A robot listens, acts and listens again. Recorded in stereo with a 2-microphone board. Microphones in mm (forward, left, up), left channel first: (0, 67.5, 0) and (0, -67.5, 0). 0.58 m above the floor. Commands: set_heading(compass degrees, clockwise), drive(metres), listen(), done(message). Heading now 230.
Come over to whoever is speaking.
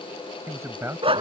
set_heading(250)
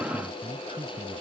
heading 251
set_heading(31)
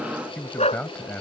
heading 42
set_heading(32)
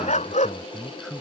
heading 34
drive(1.0)
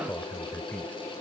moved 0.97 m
set_heading(24)
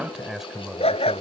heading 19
drive(1.0)
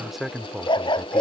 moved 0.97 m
drive(1.0)
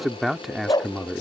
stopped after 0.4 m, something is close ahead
done("Arrived at the man speaking, straight ahead.")